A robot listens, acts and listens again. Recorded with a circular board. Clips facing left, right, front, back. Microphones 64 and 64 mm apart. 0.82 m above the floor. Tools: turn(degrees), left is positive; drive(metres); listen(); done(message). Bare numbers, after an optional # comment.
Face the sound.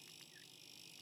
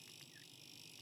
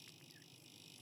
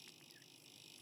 listen()
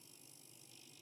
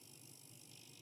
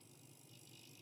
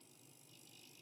listen()
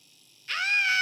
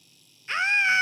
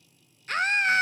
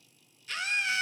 # The scream: 30° right.
turn(-30)
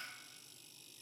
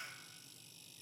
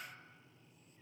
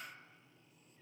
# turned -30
listen()
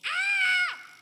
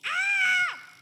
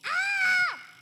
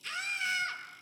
# The scream is now 10° right.
turn(-10)
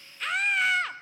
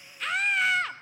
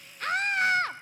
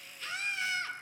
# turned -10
done("Facing the scream, under 1 m away.")